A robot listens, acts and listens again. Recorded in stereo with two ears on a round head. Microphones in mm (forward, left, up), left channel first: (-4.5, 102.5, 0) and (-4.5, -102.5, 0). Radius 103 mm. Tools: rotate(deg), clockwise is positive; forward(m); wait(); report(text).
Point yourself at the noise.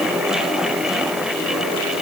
wait()
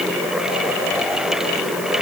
wait()
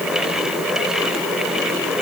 report("I can't make out anything.")